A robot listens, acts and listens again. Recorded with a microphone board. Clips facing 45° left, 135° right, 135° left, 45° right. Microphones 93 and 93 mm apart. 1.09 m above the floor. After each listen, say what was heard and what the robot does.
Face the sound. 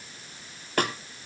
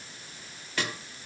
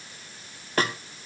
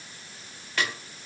The snare drum: 85° left. Turn 85° left.
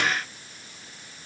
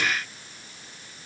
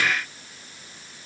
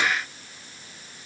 Keep listening.
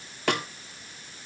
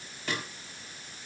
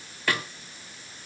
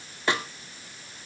The snare drum is now 25° left. Turn 25° left.
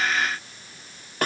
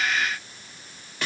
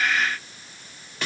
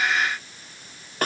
Facing the snare drum.